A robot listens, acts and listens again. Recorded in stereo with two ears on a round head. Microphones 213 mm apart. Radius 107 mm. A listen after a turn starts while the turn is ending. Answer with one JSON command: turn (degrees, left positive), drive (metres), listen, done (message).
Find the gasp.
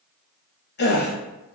{"turn": 45}
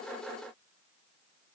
{"listen": true}
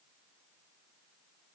{"done": "I heard a gasp, but can't make it out now. It was about straight ahead or 90° left."}